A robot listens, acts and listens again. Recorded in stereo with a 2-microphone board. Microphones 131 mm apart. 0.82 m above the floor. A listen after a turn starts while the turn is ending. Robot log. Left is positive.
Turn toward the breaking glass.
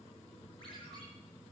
cmd idle
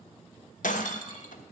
cmd yaw +90
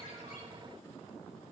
end: I heard breaking glass from this way, but can't make it out now.